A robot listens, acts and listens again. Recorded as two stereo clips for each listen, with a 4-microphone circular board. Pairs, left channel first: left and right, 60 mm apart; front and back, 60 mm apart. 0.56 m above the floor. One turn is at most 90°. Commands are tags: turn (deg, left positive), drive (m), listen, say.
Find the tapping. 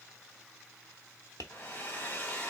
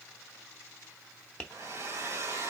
<turn deg="75"/>
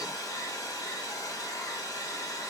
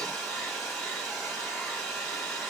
<listen/>
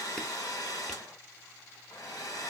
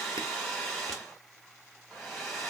<listen/>
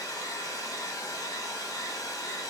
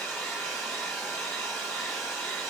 <say>Facing where the tapping came from. I can't hear it now.</say>